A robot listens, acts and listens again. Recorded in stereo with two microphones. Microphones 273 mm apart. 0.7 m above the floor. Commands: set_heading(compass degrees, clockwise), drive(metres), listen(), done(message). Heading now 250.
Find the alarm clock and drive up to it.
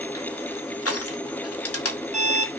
set_heading(280)
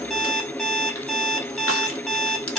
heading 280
drive(1.0)
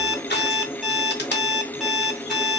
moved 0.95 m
drive(1.0)
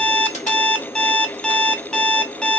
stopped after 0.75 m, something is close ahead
done("I am next to the alarm clock.")